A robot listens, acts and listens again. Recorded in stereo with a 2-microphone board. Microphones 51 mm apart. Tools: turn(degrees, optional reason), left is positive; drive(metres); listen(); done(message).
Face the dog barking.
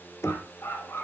turn(degrees=50, reason="The dog barking: about 50° left or 130° left.")
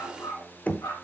turn(degrees=90, reason="So it is at 90° left.")
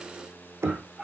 turn(degrees=-10, reason="The dog barking is now 10° right.")
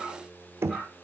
done("Facing the dog barking.")